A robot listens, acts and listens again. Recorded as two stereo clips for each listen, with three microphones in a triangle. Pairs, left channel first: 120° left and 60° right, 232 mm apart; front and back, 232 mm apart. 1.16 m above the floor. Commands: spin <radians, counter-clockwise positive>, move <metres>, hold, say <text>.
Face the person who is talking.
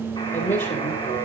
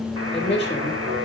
spin 1.05
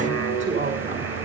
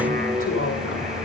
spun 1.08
say Found it: a woman speaking, straight ahead, 2 to 4 m away.